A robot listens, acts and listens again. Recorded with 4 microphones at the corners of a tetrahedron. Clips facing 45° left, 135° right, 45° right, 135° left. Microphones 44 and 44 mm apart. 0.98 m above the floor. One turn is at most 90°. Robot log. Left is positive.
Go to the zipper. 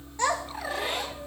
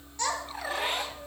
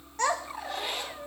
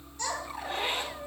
note: The zipper: 170° right.
cmd yaw -90
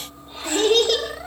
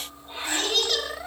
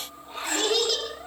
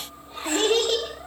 note: Nothing new. It was at 80° right.
cmd yaw -80
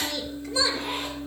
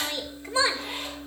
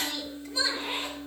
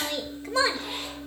note: The zipper is now 20° left.
cmd yaw +20
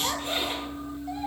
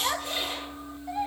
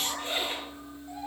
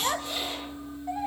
cmd fwd 1.0
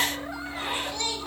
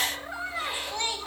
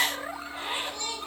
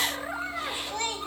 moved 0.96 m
cmd fwd 1.0
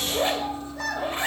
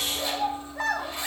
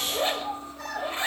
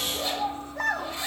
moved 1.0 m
cmd fwd 1.0
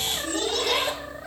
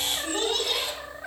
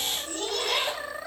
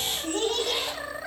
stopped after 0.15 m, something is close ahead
end: I am next to the zipper.